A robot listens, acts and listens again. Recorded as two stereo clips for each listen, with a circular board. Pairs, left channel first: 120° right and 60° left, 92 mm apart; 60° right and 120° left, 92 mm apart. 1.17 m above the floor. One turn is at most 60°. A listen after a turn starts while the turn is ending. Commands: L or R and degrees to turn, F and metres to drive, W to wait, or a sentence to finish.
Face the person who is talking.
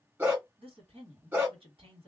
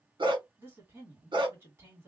L55
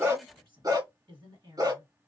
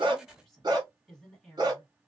L30
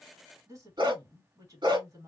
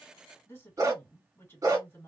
L10
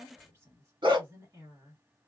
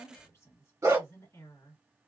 Facing the woman speaking, 1 to 2 m away.